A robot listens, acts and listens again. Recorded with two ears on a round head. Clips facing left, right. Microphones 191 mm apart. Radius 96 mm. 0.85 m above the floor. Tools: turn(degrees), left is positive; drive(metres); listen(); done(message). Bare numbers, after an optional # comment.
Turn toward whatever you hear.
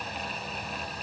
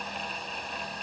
listen()
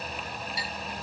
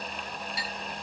# The clink: about 50° right or 130° right.
turn(-50)
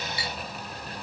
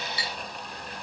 # So it is at 80° right.
turn(-80)
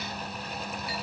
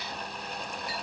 listen()
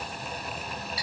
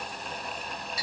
# The clink is now 40° right.
turn(-40)
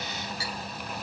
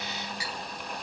# The clink is now 15° right.
turn(-15)
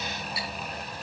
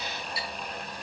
done("Facing the clink, over 4 m away.")